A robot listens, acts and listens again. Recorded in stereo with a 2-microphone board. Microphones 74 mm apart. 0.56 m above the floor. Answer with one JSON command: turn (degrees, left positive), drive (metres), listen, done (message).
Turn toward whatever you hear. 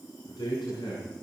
{"turn": 70}
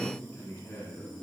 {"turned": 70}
{"turn": 40}
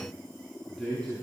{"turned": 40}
{"turn": 15}
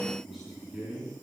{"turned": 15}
{"done": "Found it: a man speaking, straight ahead, over 4 m away."}